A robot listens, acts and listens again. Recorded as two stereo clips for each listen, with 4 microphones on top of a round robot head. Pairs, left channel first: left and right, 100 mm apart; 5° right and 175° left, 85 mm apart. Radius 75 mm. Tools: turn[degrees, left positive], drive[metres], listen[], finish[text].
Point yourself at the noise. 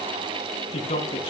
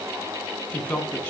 Thought: The man speaking: 70° left.
Action: turn[70]
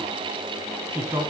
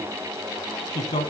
Thought: The man speaking is now 20° right.
Action: turn[-20]
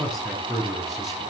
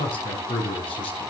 Action: finish[Facing the man speaking.]